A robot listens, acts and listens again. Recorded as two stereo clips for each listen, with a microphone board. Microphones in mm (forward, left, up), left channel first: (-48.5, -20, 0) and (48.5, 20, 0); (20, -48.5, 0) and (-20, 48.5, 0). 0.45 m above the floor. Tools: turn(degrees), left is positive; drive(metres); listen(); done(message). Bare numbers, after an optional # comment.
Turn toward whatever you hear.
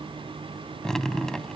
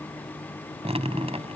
# The dripping: 120° left.
turn(120)
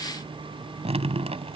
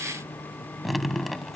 # The dripping is now 25° left.
turn(25)
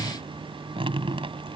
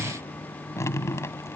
done("Found it: dripping, straight ahead.")